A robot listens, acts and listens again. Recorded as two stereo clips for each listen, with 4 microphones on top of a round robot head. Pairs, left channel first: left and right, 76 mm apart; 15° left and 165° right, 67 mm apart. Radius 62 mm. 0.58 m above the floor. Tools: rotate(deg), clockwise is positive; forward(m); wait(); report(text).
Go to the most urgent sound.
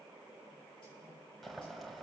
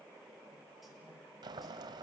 wait()
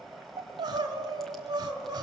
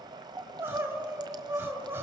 rotate(115)
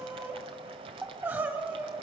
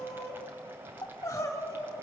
rotate(30)
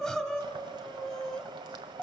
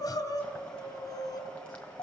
forward(1.0)
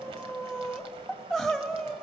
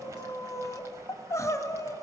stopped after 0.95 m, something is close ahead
report("I am next to the crying.")